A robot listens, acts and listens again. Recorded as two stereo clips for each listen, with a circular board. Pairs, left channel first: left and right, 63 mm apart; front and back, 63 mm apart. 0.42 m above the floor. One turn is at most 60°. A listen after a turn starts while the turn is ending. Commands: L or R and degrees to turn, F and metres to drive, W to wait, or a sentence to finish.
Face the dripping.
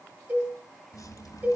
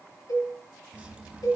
L60
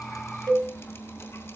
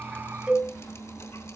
L35
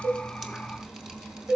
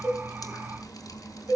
R10
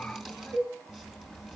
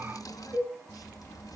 Found it: dripping, straight ahead.